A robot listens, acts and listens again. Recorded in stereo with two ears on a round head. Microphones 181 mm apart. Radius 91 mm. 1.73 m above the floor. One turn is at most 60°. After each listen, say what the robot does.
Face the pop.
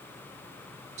Keep listening.
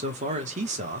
Keep listening.
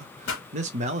Turn 60° left.
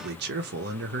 Keep listening.
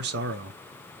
I heard a pop, but can't make it out now. It was about 10° left or 50° left.